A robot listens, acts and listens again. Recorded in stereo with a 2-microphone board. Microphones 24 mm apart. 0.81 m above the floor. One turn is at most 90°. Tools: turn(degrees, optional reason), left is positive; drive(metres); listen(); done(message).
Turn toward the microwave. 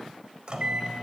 turn(degrees=-40, reason="The microwave: about 40° right or 140° right.")
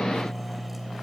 done("Facing the microwave.")